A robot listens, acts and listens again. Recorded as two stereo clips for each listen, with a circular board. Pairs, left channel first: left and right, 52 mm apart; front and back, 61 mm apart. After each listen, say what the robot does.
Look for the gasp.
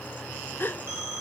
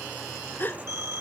Turn 50° left.
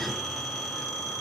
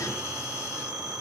Facing where the gasp came from. I can't hear it now.